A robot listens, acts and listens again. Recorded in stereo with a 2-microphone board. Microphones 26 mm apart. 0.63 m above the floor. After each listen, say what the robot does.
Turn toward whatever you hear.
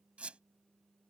Turn 55° right.
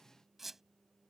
Turn 10° right.
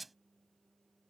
Facing the squeak.